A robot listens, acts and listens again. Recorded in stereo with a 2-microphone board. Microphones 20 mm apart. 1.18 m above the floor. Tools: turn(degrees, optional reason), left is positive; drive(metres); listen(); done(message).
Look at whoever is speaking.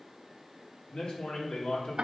turn(degrees=55, reason="The man speaking: about 55° left or 125° left.")
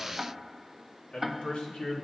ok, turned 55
turn(degrees=65, reason="So it is at 65° left.")
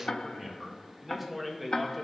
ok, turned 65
done("Facing the man speaking.")